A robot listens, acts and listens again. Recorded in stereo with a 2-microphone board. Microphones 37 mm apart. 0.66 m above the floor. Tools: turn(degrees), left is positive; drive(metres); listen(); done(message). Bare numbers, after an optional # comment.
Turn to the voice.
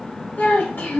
# The child speaking: about 65° left or 115° left.
turn(65)
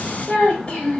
# So it is at 35° left.
turn(35)
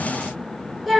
done("Facing the child speaking, 1 to 2 m away.")